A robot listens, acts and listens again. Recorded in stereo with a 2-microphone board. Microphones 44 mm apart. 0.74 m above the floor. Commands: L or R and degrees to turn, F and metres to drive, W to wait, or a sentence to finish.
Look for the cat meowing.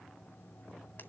W
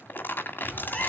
L25
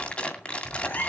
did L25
L135
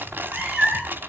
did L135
R15
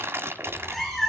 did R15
Facing the cat meowing, over 4 m away.